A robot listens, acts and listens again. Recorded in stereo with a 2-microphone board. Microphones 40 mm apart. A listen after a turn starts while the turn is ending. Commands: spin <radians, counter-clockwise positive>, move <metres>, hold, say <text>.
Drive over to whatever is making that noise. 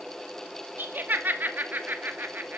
spin -0.96
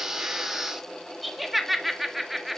move 1.0
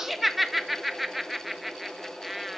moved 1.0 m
move 1.0
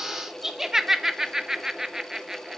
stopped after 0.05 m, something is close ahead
spin -0.17
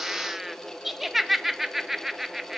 say Arrived at the laughter, straight ahead.